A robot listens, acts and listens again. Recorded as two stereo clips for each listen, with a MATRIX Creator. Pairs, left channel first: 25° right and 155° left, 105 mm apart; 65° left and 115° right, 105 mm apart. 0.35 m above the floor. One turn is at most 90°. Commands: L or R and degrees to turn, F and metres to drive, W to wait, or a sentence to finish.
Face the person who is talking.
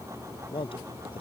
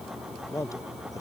L10
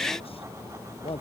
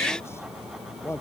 Facing the man speaking.